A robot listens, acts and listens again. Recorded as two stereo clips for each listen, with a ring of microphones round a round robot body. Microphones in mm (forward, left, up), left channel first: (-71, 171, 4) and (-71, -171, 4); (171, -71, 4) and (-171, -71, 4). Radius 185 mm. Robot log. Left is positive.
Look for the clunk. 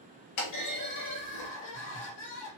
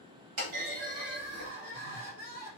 note: The clunk: 125° left.
cmd yaw +125
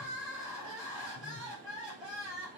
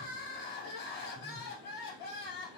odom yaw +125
end: I heard a clunk from this way, but can't make it out now.